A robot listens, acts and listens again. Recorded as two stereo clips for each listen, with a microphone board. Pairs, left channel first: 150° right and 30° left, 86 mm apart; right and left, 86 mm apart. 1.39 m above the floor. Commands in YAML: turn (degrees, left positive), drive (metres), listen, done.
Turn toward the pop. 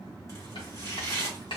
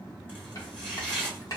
listen: true
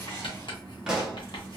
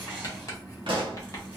turn: 110
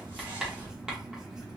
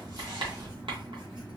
done: "I heard a pop from this way, but can't make it out now."